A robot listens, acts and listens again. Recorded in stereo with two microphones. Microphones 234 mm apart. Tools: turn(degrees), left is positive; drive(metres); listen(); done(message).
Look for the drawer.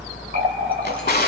turn(degrees=45)
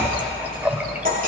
listen()
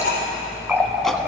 listen()
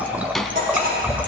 done("Facing the drawer.")